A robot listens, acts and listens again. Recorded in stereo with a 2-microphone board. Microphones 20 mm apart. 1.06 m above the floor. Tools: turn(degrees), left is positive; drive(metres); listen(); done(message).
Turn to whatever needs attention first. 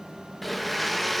listen()
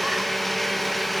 listen()
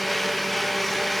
done("I can't make out anything urgent to turn to.")